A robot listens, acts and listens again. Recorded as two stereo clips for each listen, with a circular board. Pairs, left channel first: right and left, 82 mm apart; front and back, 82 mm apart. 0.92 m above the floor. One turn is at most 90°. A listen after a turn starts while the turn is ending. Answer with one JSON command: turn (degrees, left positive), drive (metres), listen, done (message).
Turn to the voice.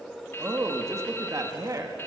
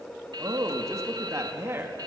{"turn": 90}
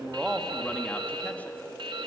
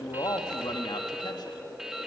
{"turn": 35}
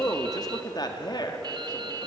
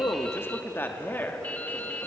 {"turn": -65}
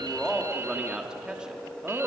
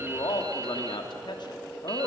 {"turn": 10}
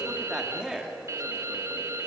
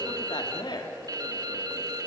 {"done": "Found it: a man speaking, straight ahead, 2 to 4 m away."}